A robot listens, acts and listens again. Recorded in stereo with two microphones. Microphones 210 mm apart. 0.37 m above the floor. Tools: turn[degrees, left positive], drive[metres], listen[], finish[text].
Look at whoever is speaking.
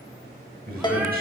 Thought: The man speaking: about 45° right or 135° right.
Action: turn[-45]
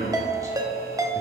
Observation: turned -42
Thought: So it is at 20° right.
Action: turn[-20]
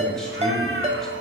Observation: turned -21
Action: listen[]
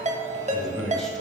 Action: finish[Found it: a man speaking, straight ahead, 1 to 2 m away.]